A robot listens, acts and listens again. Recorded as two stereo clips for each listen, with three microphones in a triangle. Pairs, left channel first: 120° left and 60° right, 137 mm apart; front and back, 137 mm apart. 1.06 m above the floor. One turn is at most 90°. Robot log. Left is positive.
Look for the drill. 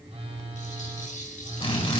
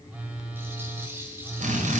note: The drill: 165° left.
cmd yaw +90
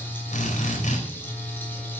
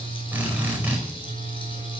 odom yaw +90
note: The drill is now 105° left.
cmd yaw +90
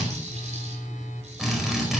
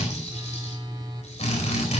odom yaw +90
note: The drill is now 30° left.
cmd yaw +30
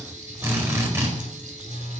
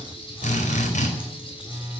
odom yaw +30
note: The drill is now 10° left.
cmd yaw +10
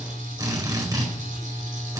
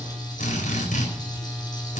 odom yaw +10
end: Facing the drill, over 4 m away.